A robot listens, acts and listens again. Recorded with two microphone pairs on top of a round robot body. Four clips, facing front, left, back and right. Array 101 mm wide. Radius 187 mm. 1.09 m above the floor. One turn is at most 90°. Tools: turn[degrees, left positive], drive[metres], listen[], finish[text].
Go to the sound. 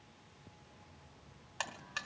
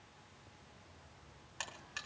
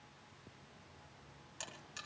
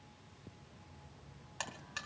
Thought: The buzzer: 15° right.
Action: turn[-15]
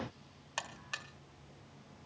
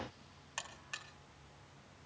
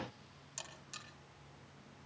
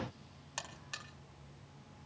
Action: drive[1.0]
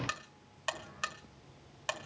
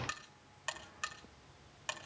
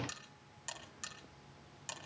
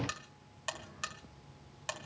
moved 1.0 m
Thought: The buzzer is now 10° right.
Action: turn[-10]
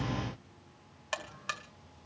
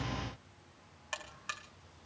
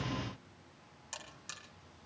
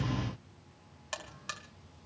Action: drive[1.0]
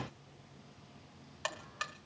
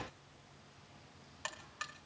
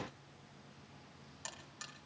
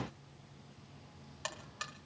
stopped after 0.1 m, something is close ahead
Action: finish[Arrived at the buzzer, straight ahead.]